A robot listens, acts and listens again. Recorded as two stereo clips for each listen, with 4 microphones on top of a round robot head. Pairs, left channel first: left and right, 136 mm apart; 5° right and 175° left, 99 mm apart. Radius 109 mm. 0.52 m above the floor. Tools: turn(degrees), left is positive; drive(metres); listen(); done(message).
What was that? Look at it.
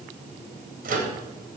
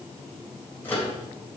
turn(degrees=-80)
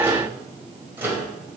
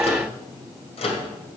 turn(degrees=-15)
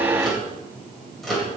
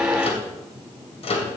done("Found it: a microwave, straight ahead.")